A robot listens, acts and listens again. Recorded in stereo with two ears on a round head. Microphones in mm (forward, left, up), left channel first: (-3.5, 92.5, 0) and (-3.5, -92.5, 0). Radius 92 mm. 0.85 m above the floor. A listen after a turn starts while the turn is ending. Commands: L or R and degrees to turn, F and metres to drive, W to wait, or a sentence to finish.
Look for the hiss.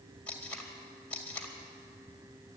W
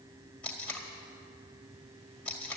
W
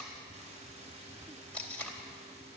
I can't make out a hiss, only tape being pulled.